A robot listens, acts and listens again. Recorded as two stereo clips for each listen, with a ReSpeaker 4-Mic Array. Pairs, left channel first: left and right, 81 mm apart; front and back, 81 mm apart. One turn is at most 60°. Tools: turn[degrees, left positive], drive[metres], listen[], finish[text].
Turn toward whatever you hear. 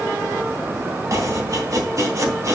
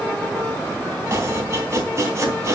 Thought: The chopping: 130° right.
Action: turn[-60]
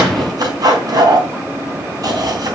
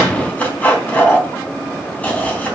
Thought: The chopping is now 65° right.
Action: turn[-60]
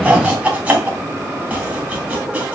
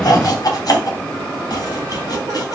Thought: The chopping is now 20° right.
Action: turn[-20]
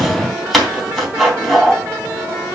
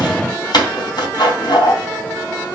Action: finish[Found it: chopping, straight ahead.]